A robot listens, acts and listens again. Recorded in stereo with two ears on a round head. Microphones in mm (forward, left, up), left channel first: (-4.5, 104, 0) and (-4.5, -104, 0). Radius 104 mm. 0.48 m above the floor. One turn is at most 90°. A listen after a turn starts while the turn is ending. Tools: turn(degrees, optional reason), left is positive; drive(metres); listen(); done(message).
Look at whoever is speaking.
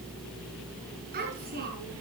turn(degrees=-40, reason="The child speaking: about 40° right or 140° right.")
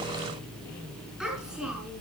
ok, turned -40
done("Facing the child speaking, over 4 m away.")